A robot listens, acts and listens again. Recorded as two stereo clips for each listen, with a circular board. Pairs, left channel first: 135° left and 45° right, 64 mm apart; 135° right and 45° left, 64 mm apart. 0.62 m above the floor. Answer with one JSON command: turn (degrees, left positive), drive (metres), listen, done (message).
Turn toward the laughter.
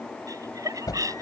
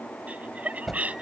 {"turn": -20}
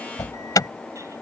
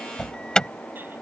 {"listen": true}
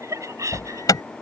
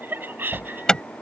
{"turn": -10}
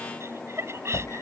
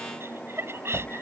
{"done": "Facing the laughter."}